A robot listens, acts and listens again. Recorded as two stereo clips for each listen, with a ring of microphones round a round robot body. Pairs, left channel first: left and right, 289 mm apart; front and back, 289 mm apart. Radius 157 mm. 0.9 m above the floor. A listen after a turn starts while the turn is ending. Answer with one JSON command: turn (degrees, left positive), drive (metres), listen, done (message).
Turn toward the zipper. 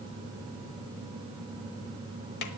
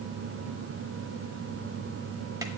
{"listen": true}
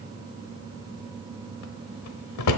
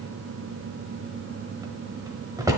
{"listen": true}
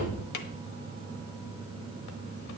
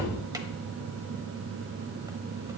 {"done": "I can't make out a zipper, only a drawer."}